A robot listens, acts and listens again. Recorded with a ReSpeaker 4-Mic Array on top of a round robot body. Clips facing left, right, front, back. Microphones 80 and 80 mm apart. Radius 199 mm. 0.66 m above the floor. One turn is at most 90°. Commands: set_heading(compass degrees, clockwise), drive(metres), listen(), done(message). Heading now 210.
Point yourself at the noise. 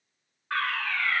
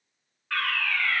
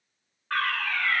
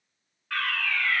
set_heading(175)
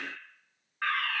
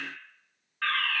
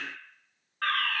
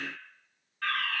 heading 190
set_heading(175)
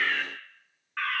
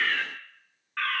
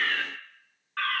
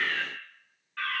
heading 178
done("Found it: a fire alarm, straight ahead, 2 to 4 m away.")